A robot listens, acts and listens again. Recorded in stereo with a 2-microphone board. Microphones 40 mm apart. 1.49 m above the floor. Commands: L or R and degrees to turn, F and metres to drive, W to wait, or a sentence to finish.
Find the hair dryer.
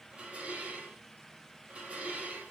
W
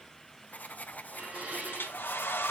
L60
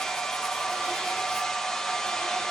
L10
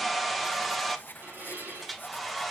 Found it: a hair dryer, straight ahead, 1 to 2 m away.